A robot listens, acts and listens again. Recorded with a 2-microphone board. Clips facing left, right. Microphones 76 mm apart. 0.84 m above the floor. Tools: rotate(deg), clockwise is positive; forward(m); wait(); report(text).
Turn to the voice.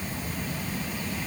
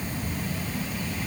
wait()
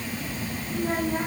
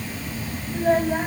rotate(90)
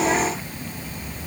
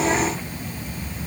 wait()
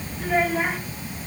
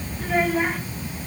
report("Found it: a child speaking, straight ahead, over 4 m away.")